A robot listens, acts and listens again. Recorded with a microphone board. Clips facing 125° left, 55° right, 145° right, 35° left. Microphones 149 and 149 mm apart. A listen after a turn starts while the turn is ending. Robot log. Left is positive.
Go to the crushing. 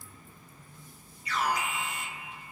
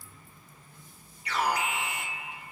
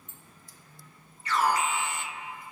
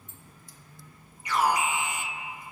cmd idle
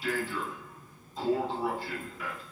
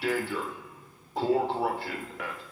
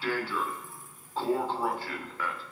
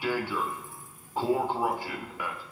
cmd idle
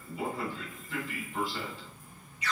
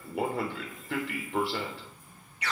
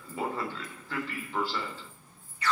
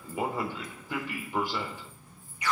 end: I can't make out crushing, only an alarm.